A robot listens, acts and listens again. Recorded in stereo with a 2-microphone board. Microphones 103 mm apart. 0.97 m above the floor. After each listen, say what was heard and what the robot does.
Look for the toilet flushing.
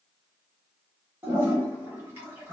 The toilet flushing: about 20° right or 160° right. Turn 20° right.
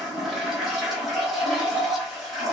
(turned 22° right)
Found it: a toilet flushing, straight ahead.